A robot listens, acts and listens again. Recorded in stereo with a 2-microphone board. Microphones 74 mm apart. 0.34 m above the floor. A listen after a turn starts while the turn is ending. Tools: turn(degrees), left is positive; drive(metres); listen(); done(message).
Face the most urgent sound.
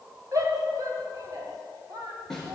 turn(degrees=-50)
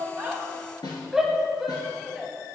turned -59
done("Found it: a shout, straight ahead.")